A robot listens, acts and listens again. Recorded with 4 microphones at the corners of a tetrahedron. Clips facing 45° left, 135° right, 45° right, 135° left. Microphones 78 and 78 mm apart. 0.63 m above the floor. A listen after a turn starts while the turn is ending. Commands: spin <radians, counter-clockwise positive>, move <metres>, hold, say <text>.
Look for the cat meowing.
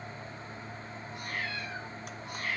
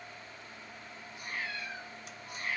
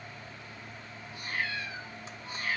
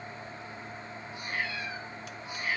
spin 1.05
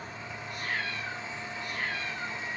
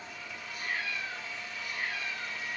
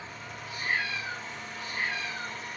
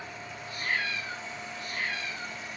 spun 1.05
spin 0.26
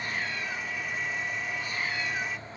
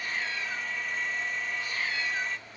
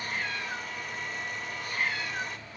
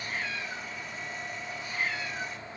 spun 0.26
spin -0.26
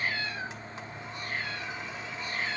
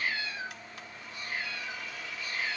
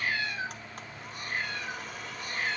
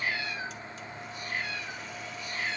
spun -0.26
say Facing the cat meowing, over 4 m away.